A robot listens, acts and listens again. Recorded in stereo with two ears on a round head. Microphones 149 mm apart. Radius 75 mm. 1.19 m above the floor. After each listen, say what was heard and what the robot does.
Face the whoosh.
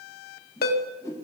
The whoosh: about 20° left or 160° left. Turn 20° left.
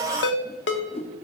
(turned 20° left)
So it is at 140° left. Turn 140° left.
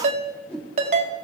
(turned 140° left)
Found it: a whoosh, straight ahead, 1 to 2 m away.